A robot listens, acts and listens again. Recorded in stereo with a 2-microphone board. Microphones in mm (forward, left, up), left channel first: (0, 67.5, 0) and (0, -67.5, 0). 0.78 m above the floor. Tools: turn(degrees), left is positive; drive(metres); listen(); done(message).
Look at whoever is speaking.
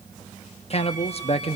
turn(degrees=50)
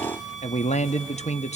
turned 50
turn(degrees=70)
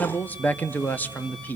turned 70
turn(degrees=15)
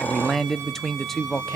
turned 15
done("Found it: a man speaking, straight ahead, under 1 m away.")